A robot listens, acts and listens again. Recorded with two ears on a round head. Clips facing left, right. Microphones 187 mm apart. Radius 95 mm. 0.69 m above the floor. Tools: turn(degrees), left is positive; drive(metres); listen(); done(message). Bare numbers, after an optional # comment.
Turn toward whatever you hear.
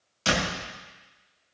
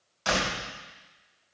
# The door slam: about 40° left or 140° left.
turn(40)
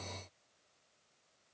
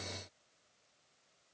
listen()
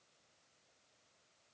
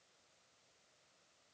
done("I heard a door slam, but can't make it out now. It was about straight ahead or 100° left.")